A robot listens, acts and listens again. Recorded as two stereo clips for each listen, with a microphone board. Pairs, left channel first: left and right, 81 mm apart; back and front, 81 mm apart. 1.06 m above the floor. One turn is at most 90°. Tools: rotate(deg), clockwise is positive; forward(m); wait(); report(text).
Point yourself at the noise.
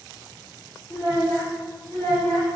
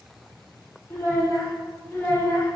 rotate(-90)
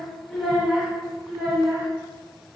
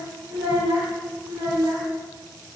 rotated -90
rotate(25)
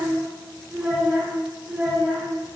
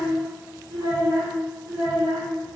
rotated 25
rotate(15)
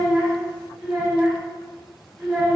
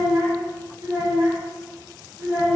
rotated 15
report("Facing the child speaking, 1 to 2 m away.")